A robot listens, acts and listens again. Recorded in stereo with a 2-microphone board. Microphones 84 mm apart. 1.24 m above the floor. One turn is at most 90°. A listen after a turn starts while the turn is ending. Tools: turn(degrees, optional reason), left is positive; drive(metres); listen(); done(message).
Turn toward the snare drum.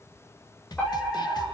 turn(degrees=55, reason="The snare drum: about 55° left or 125° left.")
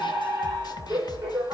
turn(degrees=65, reason="So it is at 65° left.")
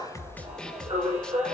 turn(degrees=10, reason="The snare drum is now 10° left.")
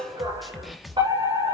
done("Found it: a snare drum, straight ahead, 1 to 2 m away.")